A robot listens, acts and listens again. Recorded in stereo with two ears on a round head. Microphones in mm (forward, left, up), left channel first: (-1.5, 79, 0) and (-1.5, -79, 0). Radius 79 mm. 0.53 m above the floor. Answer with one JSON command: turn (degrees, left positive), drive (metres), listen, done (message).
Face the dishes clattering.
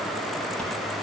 {"listen": true}
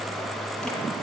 {"listen": true}
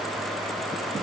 {"done": "I can't make out dishes clattering."}